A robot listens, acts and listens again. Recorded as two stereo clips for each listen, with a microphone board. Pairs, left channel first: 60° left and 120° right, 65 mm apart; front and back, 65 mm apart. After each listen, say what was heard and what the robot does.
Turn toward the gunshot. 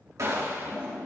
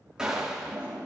The gunshot: 100° right. Turn 100° right.
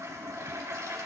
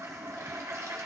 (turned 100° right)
Facing where the gunshot came from. I can't hear it now.